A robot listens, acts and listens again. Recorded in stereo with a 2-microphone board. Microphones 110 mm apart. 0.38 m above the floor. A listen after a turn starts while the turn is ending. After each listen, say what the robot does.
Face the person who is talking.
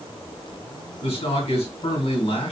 Turn 75° left.
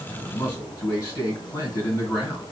Turn 25° left.
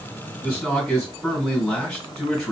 Found it: a man speaking, straight ahead, 2 to 4 m away.